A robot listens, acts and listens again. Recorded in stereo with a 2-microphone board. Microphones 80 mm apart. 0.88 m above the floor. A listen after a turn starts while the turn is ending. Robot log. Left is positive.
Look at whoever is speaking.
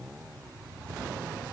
cmd idle
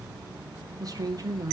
note: The woman speaking: about 50° right or 130° right.
cmd yaw -50
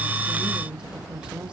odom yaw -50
note: So it is at 15° right.
cmd yaw -15
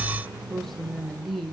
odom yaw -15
end: Facing the woman speaking, 1 to 2 m away.